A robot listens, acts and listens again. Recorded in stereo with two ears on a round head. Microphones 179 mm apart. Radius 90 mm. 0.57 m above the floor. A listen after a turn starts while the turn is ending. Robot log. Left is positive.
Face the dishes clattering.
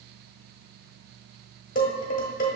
note: The dishes clattering: about 40° left or 140° left.
cmd yaw +40
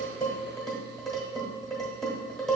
end: Found it: dishes clattering, straight ahead, 1 to 2 m away.